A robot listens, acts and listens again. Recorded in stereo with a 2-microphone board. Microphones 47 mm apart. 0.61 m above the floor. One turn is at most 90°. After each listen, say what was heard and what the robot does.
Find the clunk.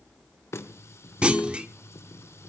The clunk: about 25° right or 155° right. Turn 25° right.
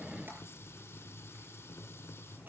Keep listening.
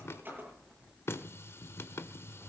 I heard a clunk, but can't make it out now. It was about straight ahead or 130° right.